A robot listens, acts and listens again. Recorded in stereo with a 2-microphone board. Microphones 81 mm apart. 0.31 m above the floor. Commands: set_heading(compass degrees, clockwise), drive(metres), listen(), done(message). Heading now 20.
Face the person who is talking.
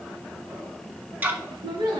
set_heading(110)
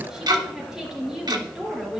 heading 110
done("Found it: a woman speaking, straight ahead.")